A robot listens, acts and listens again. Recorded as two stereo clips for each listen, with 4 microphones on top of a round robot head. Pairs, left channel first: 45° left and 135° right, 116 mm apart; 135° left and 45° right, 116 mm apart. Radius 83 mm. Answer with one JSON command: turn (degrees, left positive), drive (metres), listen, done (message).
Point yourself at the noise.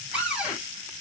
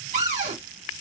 {"turn": -50}
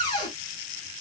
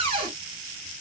{"done": "Found it: a cupboard door, straight ahead, 2 to 4 m away."}